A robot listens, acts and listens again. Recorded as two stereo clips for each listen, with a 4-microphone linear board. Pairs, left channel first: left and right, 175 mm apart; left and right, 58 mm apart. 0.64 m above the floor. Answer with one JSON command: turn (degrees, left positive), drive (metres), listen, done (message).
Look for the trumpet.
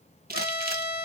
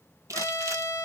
{"turn": 65}
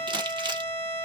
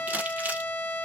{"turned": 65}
{"turn": 35}
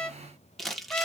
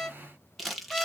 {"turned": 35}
{"done": "Facing the trumpet."}